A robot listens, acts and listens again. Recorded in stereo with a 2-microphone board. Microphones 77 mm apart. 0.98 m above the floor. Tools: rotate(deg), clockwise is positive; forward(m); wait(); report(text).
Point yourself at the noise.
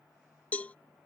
rotate(-20)
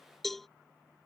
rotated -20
report("Found it: a cowbell, straight ahead.")